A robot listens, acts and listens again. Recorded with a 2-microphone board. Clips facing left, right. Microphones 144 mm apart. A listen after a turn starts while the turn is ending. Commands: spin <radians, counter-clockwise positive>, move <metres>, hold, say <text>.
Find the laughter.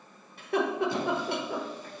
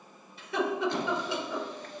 spin 1.05
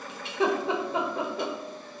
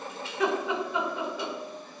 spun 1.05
spin 0.70
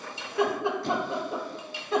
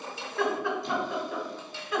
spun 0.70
spin 0.52
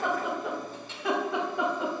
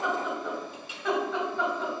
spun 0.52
spin 0.17
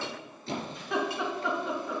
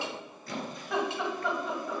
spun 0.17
say Found it: laughter, straight ahead, 2 to 4 m away.